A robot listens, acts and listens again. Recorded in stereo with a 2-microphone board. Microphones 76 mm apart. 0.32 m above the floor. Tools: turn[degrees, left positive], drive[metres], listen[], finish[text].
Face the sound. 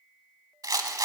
Thought: The rattle: about 55° right or 125° right.
Action: turn[-55]
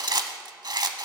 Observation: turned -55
Thought: So it is at 70° right.
Action: turn[-70]
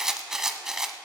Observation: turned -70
Action: finish[Facing the rattle, under 1 m away.]